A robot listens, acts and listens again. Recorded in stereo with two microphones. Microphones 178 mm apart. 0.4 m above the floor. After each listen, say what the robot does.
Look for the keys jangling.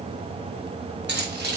Turn 90° right.
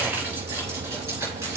Turn 20° right.
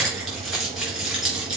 Facing the keys jangling, over 4 m away.